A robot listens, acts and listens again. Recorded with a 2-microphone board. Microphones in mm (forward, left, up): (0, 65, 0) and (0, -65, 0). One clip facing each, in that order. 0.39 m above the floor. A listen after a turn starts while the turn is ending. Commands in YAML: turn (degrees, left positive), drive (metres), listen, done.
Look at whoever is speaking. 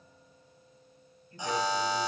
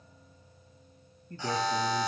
turn: -75
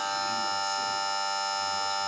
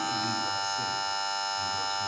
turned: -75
listen: true
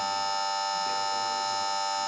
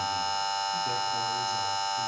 listen: true
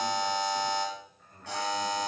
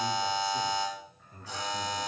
done: "Facing the man speaking."